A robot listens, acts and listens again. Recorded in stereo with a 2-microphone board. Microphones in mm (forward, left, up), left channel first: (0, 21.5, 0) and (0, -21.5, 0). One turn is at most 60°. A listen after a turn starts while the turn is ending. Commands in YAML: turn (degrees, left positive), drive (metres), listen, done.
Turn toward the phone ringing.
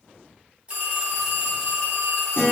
turn: -25
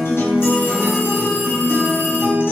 listen: true
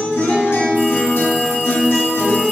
listen: true
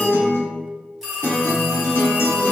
done: "Found it: a phone ringing, straight ahead, 1 to 2 m away."